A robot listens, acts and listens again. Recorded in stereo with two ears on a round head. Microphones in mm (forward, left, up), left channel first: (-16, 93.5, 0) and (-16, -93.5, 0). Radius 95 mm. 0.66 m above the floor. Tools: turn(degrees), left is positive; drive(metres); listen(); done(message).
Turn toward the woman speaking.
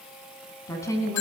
turn(degrees=30)
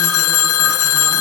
listen()
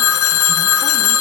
listen()
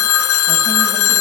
done("I heard a woman speaking, but can't make it out now. It was about 15° right or 135° left.")